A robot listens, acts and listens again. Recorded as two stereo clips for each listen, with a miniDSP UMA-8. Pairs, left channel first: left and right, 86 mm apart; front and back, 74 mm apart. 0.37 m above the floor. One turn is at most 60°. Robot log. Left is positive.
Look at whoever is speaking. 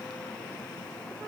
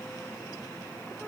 cmd idle
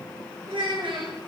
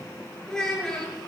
note: The child speaking: 80° right.
cmd yaw -60
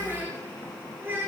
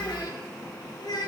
note: The child speaking is now 25° right.
cmd yaw -25
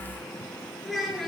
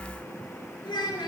end: Found it: a child speaking, straight ahead.